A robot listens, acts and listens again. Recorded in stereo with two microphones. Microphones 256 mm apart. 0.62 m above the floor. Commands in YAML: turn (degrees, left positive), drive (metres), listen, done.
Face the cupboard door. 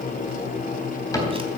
turn: 30
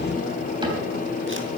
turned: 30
listen: true
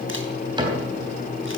turn: -20
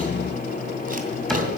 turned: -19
done: "Facing the cupboard door, 2 to 4 m away."